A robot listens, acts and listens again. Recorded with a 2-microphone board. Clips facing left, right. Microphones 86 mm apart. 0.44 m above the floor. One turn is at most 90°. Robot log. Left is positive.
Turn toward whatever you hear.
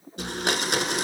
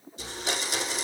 note: The blender: about 60° left or 120° left.
cmd yaw +60
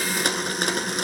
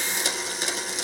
note: So it is at 60° left.
cmd yaw +60
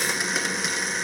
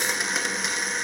end: Facing the blender.